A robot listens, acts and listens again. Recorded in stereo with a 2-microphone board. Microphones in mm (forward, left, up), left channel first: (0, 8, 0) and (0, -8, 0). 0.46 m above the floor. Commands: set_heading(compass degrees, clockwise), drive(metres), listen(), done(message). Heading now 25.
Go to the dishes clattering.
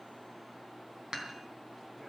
set_heading(75)
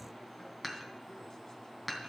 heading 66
drive(1.0)
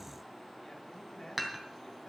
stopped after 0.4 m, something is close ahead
set_heading(76)
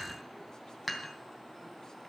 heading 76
done("Blocked. The dishes clattering is further on, straight ahead.")